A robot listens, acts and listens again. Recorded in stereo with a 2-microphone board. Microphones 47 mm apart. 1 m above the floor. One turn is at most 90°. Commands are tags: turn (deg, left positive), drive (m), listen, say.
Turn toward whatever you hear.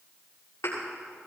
<turn deg="70"/>
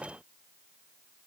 <listen/>
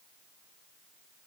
<say>I heard a thud, but can't make it out now. It was about straight ahead or 40° left.</say>